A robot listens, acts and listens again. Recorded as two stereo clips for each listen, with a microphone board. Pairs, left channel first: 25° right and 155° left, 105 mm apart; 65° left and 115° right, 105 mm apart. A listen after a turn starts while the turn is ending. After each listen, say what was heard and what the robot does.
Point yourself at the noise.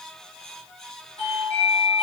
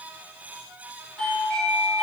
The doorbell: 15° right. Turn 15° right.
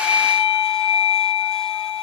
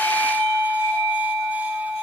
Facing the doorbell, 2 to 4 m away.